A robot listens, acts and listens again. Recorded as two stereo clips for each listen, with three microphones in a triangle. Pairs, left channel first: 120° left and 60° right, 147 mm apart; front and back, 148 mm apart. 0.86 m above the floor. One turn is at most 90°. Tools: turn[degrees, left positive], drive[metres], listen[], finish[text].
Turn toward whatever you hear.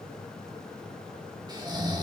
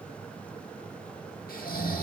Action: finish[Facing the snoring, 1 to 2 m away.]